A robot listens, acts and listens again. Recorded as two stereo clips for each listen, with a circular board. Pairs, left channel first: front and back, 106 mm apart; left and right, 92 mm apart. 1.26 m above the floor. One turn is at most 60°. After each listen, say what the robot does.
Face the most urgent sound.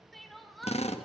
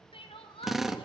Turn 60° left.
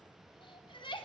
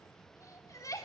Turn 35° left.
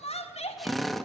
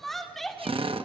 Found it: crying, straight ahead.